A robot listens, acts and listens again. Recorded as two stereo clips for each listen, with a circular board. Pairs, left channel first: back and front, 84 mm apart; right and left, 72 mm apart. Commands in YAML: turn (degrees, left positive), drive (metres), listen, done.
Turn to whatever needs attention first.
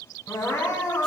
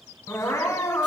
turn: -130
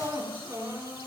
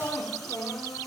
turn: -45
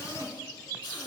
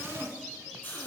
turn: -20
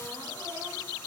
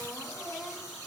listen: true
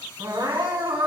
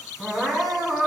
done: "Facing the crying."